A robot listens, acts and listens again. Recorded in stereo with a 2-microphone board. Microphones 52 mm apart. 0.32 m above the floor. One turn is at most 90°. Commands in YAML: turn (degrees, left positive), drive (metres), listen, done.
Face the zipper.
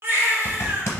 turn: 50
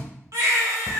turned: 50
listen: true
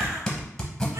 turn: 10
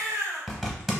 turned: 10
done: "Found it: a zipper, straight ahead."